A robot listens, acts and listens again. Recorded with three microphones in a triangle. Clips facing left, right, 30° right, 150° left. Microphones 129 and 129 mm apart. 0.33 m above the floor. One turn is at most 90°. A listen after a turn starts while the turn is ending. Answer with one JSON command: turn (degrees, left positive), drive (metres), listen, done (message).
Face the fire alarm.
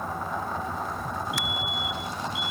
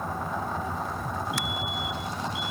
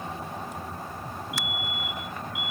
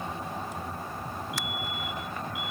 {"turn": -30}
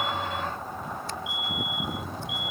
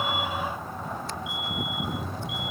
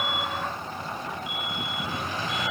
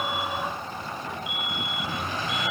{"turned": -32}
{"done": "Facing the fire alarm."}